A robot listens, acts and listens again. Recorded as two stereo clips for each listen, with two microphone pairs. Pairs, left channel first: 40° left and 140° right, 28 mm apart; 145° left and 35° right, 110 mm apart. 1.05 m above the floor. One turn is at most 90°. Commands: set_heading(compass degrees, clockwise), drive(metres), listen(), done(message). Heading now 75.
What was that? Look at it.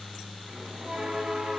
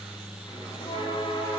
set_heading(345)
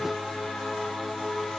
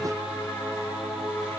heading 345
set_heading(270)
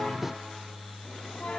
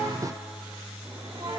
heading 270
done("Facing the bell, 2 to 4 m away.")